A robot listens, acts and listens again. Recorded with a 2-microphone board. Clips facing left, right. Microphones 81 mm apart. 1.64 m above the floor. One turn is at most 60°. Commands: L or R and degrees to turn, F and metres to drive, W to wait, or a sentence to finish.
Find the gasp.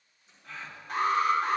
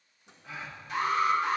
R30
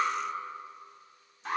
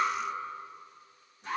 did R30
W
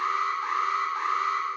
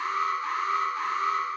I heard a gasp, but can't make it out now. It was about 20° left or 140° right.